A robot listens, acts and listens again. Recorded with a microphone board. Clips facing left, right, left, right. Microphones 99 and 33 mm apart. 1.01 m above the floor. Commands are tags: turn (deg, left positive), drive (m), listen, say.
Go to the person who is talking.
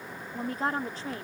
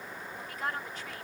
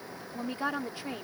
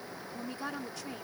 <turn deg="30"/>
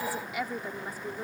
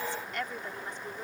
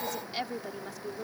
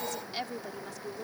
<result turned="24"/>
<turn deg="10"/>
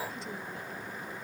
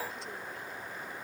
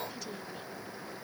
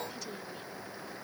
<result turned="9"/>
<listen/>
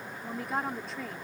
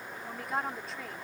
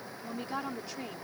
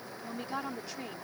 <drive m="1.0"/>
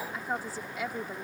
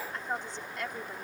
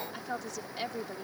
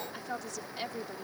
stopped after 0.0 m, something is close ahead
<say>Blocked. The woman speaking is further on, straight ahead.</say>